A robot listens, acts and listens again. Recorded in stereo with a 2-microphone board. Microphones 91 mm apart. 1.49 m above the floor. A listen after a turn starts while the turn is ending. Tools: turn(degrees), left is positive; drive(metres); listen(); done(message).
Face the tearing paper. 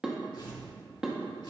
turn(degrees=60)
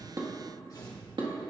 turn(degrees=50)
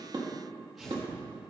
done("Found it: tearing paper, straight ahead.")